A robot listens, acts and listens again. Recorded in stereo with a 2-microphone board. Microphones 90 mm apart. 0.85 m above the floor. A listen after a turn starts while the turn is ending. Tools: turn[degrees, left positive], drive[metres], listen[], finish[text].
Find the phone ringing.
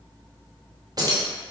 Action: listen[]
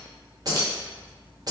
Action: listen[]
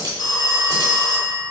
Thought: The phone ringing: about 45° left or 135° left.
Action: turn[45]
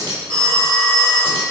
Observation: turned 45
Action: finish[Found it: a phone ringing, straight ahead.]